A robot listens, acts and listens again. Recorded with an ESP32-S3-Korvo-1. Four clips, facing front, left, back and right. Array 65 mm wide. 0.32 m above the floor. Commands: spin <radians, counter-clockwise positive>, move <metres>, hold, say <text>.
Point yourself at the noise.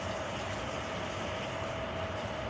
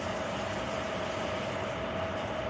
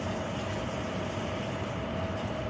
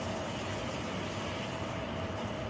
hold
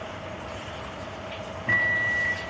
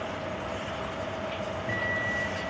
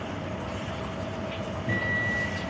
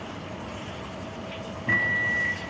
spin -0.70
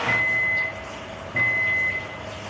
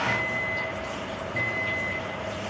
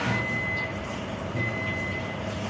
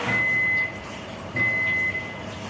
say Facing the microwave, 2 to 4 m away.